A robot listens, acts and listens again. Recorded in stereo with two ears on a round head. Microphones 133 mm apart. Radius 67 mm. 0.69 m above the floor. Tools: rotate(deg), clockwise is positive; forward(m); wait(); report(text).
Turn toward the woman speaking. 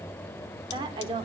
rotate(35)
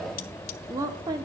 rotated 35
rotate(25)
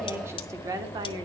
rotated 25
rotate(30)
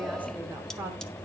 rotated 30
wait()
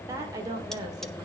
rotate(25)
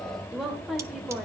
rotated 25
report("Facing the woman speaking, 1 to 2 m away.")